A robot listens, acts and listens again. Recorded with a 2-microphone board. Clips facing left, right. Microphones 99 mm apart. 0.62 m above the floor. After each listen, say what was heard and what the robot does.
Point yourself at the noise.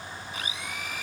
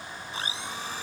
The blender: about 30° right or 150° right. Turn 30° right.
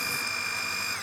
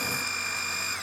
Found it: a blender, straight ahead.